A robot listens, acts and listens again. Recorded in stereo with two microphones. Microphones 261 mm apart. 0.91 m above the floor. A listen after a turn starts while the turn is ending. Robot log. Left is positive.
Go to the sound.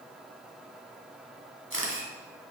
note: The camera shutter: about 55° right or 125° right.
cmd yaw -55
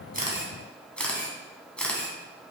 cmd fwd 1.0
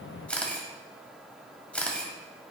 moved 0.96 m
cmd fwd 1.0
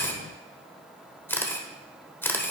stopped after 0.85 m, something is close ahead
note: The camera shutter is now 10° left.
cmd yaw +10
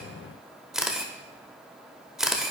end: I am next to the camera shutter.